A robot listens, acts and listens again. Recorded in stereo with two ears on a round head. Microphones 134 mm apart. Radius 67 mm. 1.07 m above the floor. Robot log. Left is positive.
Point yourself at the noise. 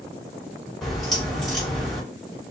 cmd yaw +30
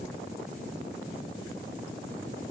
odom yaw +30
cmd idle
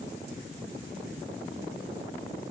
end: I heard a crack, but can't make it out now. It was about 30° right or 150° left.